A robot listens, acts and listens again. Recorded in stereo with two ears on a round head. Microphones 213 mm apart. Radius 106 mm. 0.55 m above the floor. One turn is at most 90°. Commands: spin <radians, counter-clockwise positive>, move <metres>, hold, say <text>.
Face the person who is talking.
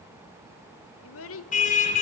spin 1.05
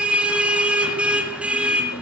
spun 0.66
hold
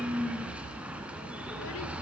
hold
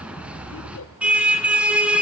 say I heard a child speaking, but can't make it out now. It was about 25° left or 80° left.